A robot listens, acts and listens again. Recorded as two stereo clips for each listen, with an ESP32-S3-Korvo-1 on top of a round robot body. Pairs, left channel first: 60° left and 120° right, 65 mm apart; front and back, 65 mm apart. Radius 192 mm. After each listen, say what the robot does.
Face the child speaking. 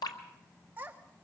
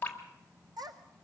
Turn 175° left.
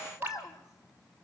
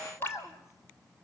Turn 40° left.
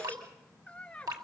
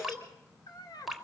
Turn 15° right.
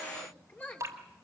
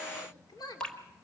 Facing the child speaking.